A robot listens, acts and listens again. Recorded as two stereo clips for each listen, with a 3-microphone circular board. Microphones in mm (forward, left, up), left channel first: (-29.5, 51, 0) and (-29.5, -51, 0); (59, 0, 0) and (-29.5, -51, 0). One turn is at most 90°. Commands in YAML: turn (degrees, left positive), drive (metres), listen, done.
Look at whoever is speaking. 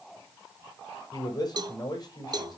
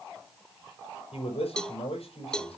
turn: 40
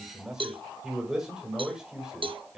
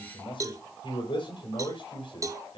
done: "Found it: a man speaking, straight ahead, over 4 m away."